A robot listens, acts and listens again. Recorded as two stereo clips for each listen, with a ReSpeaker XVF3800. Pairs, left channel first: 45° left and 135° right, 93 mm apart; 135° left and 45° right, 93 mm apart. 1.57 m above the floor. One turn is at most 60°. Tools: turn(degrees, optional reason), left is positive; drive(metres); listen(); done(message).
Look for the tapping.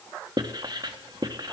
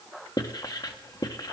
listen()
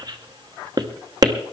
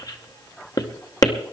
listen()
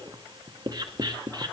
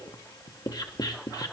done("I can't make out tapping to turn to.")